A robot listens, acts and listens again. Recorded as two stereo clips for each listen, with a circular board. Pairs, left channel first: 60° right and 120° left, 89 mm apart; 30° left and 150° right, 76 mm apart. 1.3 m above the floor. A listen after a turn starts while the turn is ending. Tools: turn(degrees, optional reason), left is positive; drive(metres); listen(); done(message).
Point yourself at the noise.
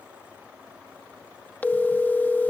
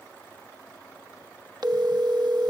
turn(degrees=-130, reason="The phone ringing: 130° right.")
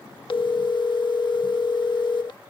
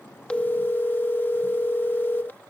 turn(degrees=-35, reason="The phone ringing is now 35° right.")
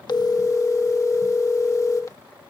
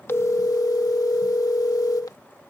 turn(degrees=-10, reason="The phone ringing is now 10° right.")
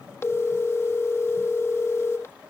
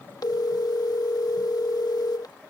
done("Found it: a phone ringing, straight ahead.")